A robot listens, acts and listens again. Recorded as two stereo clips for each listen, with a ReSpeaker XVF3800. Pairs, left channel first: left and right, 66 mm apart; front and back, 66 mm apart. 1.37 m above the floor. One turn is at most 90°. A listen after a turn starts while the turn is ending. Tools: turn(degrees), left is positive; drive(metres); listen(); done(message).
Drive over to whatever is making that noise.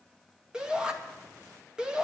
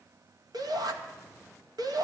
turn(degrees=-90)
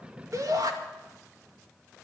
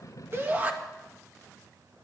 turn(degrees=-90)
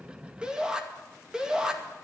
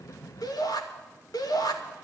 turn(degrees=-10)
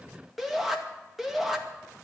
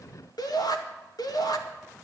drive(metres=1.0)
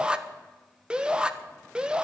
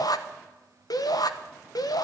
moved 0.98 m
turn(degrees=-15)
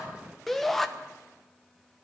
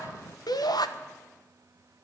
drive(metres=1.0)
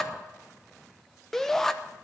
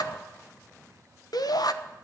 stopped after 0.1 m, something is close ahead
done("Arrived at the shout, straight ahead.")